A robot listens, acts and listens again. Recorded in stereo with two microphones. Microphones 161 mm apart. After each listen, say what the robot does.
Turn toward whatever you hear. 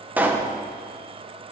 Turn 30° right.
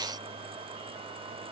Keep listening.
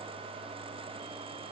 I heard a pop, but can't make it out now. It was about 20° left or 140° right.